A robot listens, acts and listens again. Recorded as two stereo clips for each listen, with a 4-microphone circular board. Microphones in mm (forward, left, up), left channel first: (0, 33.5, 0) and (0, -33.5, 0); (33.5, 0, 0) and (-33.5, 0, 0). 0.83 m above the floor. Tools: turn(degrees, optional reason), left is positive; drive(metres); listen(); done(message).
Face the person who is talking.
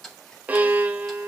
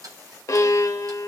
listen()
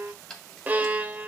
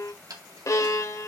listen()
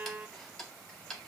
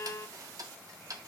done("I can't make out anyone speaking to turn to.")